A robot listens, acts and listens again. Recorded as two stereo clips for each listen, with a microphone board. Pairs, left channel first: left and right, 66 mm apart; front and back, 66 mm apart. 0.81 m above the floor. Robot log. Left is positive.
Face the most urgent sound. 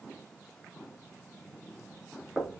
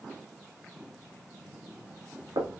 cmd idle
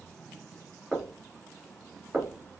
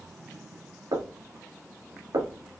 cmd idle
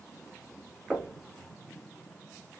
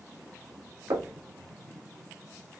end: I can't make out anything urgent, only knocking.